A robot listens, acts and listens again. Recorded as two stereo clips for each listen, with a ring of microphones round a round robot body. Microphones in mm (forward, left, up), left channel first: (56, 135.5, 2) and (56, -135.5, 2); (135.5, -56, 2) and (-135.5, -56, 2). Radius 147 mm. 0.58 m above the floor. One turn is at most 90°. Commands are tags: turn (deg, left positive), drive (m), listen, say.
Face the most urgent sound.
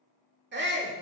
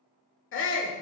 <turn deg="-40"/>
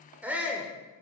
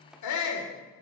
<say>Found it: a shout, straight ahead.</say>